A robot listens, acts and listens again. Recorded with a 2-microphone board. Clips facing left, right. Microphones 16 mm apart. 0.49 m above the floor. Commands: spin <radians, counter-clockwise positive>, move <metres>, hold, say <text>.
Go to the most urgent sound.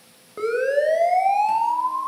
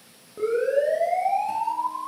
spin 0.96
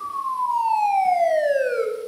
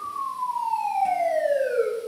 spin 1.05
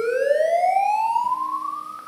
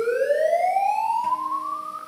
spin 0.35
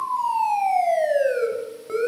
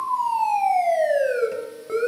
move 1.0
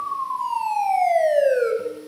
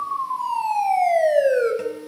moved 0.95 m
move 1.0
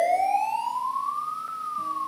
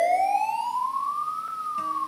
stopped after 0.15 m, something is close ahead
say Blocked. The siren is further on, straight ahead.